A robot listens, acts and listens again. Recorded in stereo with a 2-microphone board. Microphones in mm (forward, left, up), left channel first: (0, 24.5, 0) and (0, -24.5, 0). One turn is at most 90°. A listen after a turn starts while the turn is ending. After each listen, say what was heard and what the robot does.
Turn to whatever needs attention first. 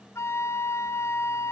Keep listening.
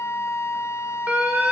The alarm: about 30° right or 150° right. Turn 30° right.
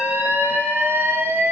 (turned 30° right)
So it is at 115° right. Turn 90° right.
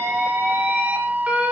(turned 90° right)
The alarm is now 30° right. Turn 30° right.
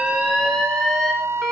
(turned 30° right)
Facing the alarm, over 4 m away.